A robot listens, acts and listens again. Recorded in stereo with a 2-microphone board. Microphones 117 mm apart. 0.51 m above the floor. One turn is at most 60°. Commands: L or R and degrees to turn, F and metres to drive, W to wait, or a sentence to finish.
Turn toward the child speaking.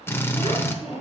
R60
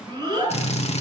R35
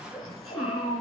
Facing the child speaking, 2 to 4 m away.